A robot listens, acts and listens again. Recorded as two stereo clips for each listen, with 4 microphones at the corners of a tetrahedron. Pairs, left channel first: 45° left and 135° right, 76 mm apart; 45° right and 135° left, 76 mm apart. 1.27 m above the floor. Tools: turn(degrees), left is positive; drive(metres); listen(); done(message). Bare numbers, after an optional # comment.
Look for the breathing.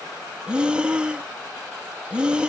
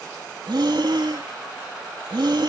# The breathing: 150° left.
turn(150)
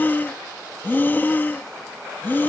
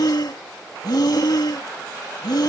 # The breathing is now 20° right.
turn(-20)
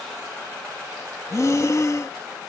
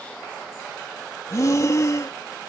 done("Found it: breathing, straight ahead.")